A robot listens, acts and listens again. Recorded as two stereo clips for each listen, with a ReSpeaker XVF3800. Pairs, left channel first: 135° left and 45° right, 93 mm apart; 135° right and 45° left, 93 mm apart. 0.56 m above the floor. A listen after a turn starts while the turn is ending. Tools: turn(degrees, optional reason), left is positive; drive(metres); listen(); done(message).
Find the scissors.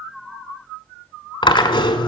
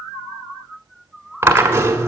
listen()
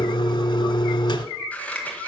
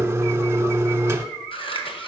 turn(degrees=-150, reason="The scissors: 150° right.")
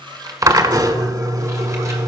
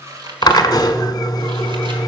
listen()
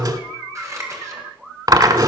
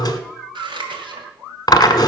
turn(degrees=10, reason="The scissors is now 10° left.")
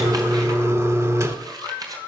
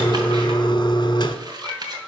done("Found it: scissors, straight ahead.")